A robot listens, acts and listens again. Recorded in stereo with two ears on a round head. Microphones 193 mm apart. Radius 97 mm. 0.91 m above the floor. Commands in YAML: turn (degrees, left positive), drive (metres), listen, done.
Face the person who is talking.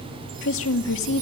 turn: 65
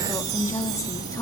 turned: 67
turn: 15
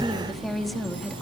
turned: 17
done: "Found it: a woman speaking, straight ahead."